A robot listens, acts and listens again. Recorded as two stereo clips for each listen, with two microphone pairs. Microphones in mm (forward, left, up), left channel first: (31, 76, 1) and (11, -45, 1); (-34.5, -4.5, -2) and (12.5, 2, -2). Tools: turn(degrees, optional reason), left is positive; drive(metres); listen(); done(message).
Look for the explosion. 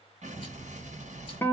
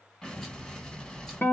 turn(degrees=-95, reason="The explosion: 95° right.")
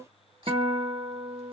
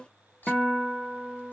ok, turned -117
turn(degrees=20, reason="Nothing new. It was at 20° left.")
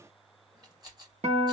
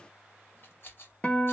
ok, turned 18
done("I heard an explosion from this way, but can't make it out now.")